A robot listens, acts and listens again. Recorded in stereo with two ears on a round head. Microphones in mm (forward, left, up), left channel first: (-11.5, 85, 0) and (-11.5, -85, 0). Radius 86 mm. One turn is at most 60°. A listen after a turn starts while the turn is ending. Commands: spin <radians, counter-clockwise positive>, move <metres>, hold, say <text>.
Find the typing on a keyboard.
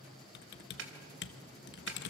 spin 1.05
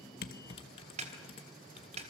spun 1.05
spin 0.61
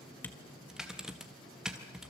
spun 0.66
say Facing the typing on a keyboard, 1 to 2 m away.